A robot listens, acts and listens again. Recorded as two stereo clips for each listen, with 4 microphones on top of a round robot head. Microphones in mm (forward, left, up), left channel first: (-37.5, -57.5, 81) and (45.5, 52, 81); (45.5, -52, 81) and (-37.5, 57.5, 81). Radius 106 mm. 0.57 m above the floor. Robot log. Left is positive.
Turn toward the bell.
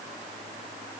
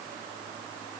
cmd idle
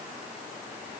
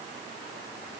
cmd idle
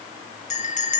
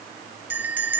note: The bell: 155° right.
cmd yaw -155
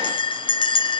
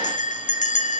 note: The bell is now 75° right.
cmd yaw -75
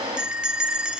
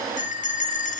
note: The bell is now 30° right.
cmd yaw -30
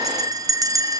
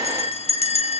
note: The bell is now 10° right.
cmd yaw -10
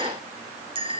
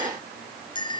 end: Found it: a bell, straight ahead, under 1 m away.